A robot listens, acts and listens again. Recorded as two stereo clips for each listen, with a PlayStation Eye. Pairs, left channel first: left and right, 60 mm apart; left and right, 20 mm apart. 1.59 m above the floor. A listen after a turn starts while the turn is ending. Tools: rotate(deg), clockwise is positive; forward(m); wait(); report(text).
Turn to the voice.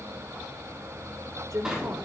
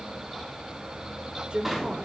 rotate(60)
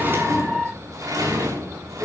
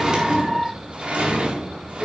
wait()
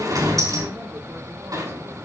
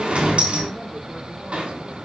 wait()
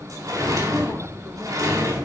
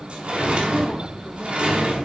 report("I heard a woman speaking, but can't make it out now. It was about straight ahead or 60° right.")